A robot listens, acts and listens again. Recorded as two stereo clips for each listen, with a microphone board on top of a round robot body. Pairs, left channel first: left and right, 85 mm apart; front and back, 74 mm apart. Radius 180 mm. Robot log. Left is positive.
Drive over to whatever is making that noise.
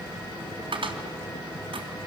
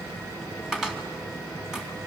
note: The cupboard door: 100° right.
cmd yaw -100
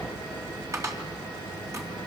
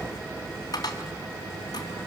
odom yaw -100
note: The cupboard door is now 35° right.
cmd yaw -35
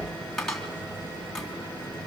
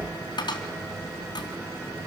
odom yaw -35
cmd fwd 1.0
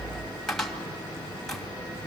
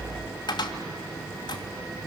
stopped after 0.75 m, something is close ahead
end: Blocked. The cupboard door is further on, straight ahead.